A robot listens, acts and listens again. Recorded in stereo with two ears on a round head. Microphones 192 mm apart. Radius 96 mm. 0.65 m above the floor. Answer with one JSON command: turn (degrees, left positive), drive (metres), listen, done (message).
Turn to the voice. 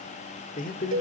{"turn": 40}
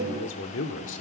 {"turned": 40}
{"turn": 95}
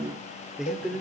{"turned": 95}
{"done": "Found it: a man speaking, straight ahead, 1 to 2 m away."}